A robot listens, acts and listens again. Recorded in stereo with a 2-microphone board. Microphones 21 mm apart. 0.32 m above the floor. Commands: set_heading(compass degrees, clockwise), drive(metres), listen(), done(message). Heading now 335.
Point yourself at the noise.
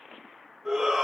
set_heading(350)
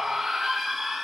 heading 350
done("Found it: a shout, straight ahead.")